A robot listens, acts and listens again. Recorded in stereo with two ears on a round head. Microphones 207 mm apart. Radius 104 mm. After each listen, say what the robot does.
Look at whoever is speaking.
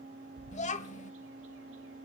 Turn 30° left.
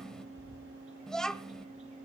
Found it: a child speaking, straight ahead, 1 to 2 m away.